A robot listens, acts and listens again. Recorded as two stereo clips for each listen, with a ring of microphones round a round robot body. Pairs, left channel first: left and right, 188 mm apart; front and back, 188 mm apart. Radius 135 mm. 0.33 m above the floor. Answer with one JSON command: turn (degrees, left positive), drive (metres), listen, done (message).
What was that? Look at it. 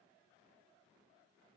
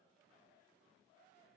{"listen": true}
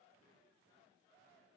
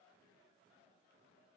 {"listen": true}
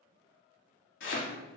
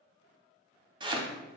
{"turn": 115}
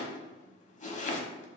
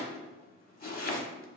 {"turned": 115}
{"turn": 40}
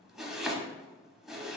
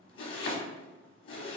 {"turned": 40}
{"done": "Found it: chopping, straight ahead, 1 to 2 m away."}